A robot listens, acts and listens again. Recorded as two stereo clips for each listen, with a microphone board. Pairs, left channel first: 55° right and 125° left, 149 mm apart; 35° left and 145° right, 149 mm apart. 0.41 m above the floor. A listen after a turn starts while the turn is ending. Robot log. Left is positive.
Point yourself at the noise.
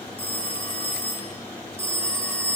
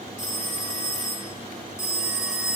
end: Facing the phone ringing, 2 to 4 m away.